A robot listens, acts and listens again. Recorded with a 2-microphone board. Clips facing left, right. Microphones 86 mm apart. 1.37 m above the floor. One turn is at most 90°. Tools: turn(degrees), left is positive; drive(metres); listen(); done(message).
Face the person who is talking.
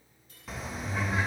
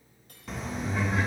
turn(degrees=-50)
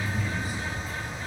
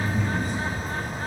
done("Found it: a man speaking, straight ahead, 2 to 4 m away.")